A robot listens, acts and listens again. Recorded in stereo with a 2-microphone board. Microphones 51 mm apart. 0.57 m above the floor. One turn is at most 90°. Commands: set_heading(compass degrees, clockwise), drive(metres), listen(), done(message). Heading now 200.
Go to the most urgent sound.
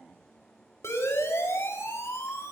set_heading(135)
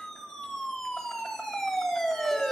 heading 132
set_heading(122)
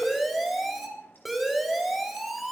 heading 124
drive(1.0)
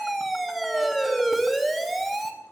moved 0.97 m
drive(1.0)
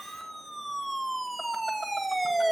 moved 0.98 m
drive(1.0)
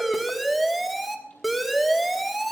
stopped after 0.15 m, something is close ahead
done("I am next to the siren.")